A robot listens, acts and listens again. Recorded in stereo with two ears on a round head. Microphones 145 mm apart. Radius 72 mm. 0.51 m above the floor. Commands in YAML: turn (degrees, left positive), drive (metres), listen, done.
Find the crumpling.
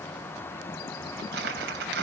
turn: -70
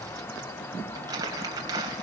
turn: -25
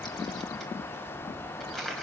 done: "Found it: crumpling, straight ahead."